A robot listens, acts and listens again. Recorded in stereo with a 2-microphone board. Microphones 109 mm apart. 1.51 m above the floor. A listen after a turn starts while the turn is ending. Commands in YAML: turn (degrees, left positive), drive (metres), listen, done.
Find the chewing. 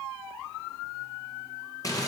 listen: true
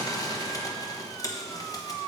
listen: true
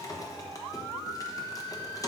done: "I can't make out chewing to turn to."